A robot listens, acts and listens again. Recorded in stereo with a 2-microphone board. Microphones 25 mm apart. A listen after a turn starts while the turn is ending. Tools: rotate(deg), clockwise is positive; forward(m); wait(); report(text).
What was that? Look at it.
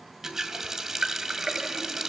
rotate(15)
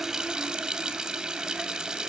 rotate(150)
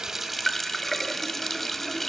report("Found it: a running tap, straight ahead.")